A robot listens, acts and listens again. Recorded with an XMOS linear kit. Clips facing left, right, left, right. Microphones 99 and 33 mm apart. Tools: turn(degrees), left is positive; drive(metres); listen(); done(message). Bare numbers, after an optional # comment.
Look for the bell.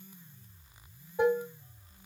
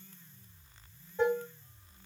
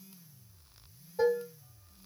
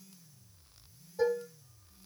listen()
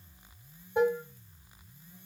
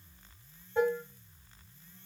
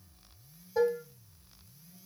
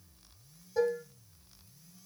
listen()
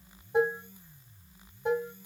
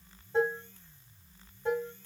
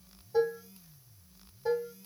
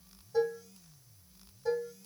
done("I can't make out a bell, only dishes clattering.")